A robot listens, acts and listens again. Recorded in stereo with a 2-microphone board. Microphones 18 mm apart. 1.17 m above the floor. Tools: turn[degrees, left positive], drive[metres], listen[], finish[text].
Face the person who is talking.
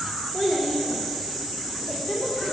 Thought: The child speaking: about 75° left or 105° left.
Action: turn[75]
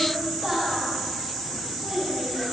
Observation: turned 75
Thought: So it is at 10° right.
Action: turn[-10]
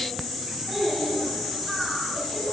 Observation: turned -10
Action: finish[Found it: a child speaking, straight ahead.]